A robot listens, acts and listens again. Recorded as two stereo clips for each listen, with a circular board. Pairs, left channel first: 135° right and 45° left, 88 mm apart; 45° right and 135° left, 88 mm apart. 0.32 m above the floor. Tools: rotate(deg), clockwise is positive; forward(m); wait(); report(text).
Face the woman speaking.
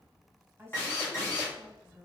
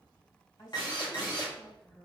rotate(15)
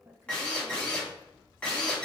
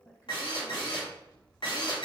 report("Found it: a woman speaking, straight ahead, 1 to 2 m away.")